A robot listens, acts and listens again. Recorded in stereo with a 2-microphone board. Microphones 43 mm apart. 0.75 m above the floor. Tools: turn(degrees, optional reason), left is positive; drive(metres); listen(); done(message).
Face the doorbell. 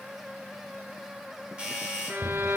turn(degrees=-20, reason="The doorbell: about 20° right or 160° right.")
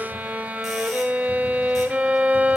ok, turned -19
listen()
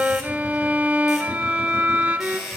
done("Facing the doorbell, over 4 m away.")